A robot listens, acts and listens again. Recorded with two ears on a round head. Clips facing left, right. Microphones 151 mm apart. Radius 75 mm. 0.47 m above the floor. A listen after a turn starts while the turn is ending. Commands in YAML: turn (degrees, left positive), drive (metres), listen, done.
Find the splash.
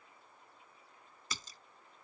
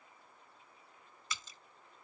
turn: 35
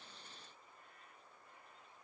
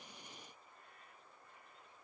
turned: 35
listen: true
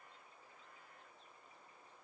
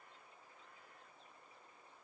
done: "I heard a splash, but can't make it out now. It was about straight ahead or 110° left."